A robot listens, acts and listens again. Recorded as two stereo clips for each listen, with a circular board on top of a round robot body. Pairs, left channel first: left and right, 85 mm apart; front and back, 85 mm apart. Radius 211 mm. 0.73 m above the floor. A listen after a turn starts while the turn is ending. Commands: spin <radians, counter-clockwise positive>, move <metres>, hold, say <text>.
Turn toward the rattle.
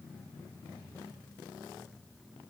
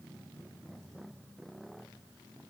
hold
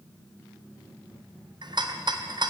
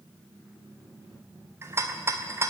spin -2.09
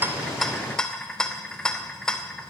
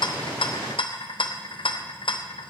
spin 0.17
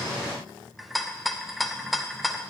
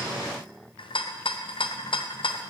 say Found it: a rattle, straight ahead.